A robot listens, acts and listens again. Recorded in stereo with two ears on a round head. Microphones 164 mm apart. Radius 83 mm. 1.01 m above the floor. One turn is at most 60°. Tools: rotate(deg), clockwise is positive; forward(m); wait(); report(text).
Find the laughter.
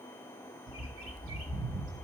wait()
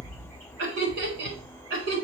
rotate(60)
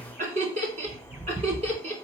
rotate(35)
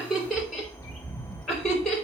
report("Facing the laughter.")